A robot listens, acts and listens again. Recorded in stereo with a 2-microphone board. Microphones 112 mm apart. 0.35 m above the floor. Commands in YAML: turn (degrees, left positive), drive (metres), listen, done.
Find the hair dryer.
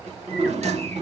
listen: true
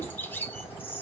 listen: true
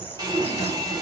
turn: -40
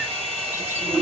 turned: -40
turn: -90
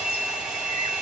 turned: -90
done: "Found it: a hair dryer, straight ahead, 1 to 2 m away."